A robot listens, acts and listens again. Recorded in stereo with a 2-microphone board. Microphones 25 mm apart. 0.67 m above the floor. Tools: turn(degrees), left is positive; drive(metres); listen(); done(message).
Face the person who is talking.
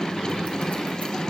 listen()
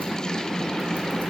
listen()
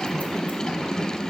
done("I can't make out anyone speaking to turn to.")